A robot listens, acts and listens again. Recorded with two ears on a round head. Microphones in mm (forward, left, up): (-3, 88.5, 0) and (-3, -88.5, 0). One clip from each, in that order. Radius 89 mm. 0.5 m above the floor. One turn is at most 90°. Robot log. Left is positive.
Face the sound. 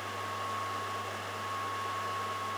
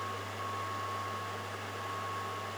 cmd idle
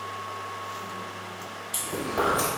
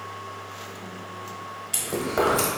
note: The chewing: about 30° right or 150° right.
cmd yaw -30
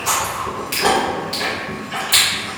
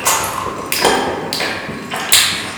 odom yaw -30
note: So it is at 115° right.
cmd yaw -90
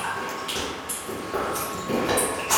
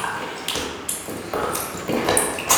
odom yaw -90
note: The chewing is now 50° right.
cmd yaw -50
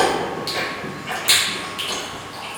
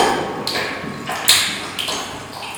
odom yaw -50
note: The chewing is now 15° right.
cmd yaw -15
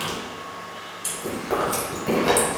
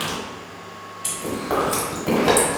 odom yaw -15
end: Found it: chewing, straight ahead.